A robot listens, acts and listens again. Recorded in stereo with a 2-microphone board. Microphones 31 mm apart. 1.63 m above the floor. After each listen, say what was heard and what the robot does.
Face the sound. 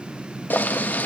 The boiling: about 70° left or 110° left. Turn 70° left.
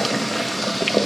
Found it: boiling, straight ahead.